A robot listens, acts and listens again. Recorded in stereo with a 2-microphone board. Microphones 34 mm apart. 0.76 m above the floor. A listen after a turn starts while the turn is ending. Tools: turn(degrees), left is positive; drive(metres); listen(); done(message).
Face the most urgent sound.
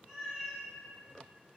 listen()
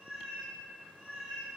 listen()
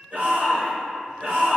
turn(degrees=-60)
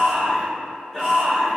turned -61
done("Found it: a shout, straight ahead, 1 to 2 m away.")